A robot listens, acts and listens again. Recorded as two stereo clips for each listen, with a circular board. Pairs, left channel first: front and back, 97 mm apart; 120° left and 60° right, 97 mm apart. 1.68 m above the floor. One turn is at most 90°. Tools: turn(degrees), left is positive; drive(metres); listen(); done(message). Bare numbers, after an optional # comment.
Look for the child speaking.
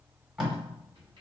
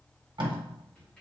listen()
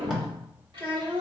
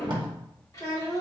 # The child speaking: 175° left.
turn(90)
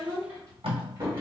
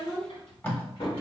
# The child speaking is now 110° left.
turn(90)
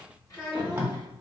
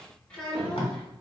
# The child speaking is now 40° left.
turn(40)
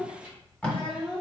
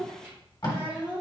# The child speaking is now 20° left.
turn(20)
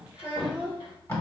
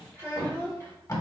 done("Facing the child speaking, 2 to 4 m away.")